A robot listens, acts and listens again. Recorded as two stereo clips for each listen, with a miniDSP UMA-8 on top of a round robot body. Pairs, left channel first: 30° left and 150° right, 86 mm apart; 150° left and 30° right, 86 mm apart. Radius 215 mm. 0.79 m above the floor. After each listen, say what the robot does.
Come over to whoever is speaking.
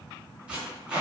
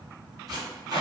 Keep listening.
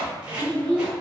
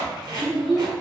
Turn 35° right.
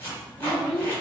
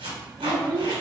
Drive 1.0 m forward.
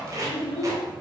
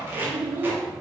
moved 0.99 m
Turn 10° left.
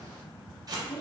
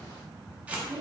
Drive 1.0 m forward.
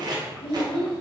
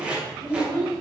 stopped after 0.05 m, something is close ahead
Arrived at the child speaking, straight ahead.